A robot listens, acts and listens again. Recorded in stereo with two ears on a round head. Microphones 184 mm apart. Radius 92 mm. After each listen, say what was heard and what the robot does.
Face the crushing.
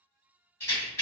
Keep listening.
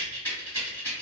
Keep listening.
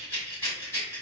I can't make out crushing to turn to.